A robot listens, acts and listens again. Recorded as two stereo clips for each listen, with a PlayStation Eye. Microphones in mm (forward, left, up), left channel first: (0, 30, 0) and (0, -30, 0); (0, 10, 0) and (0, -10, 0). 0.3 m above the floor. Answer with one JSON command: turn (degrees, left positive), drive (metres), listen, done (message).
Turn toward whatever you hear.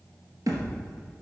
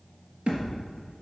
{"turn": -70}
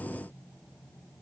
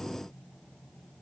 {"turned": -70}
{"listen": true}
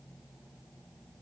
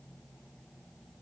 {"done": "I heard a thud, but can't make it out now. It was about straight ahead or 40° right."}